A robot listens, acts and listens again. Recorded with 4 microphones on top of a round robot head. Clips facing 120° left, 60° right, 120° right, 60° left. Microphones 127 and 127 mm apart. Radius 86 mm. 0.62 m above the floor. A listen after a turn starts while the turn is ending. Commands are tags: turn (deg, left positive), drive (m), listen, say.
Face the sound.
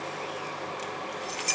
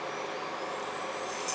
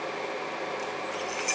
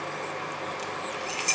<turn deg="125"/>
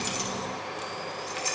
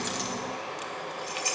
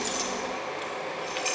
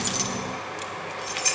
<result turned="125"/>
<turn deg="20"/>
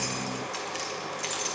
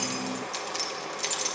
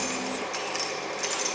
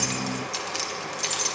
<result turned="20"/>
<say>Facing the keys jangling, 1 to 2 m away.</say>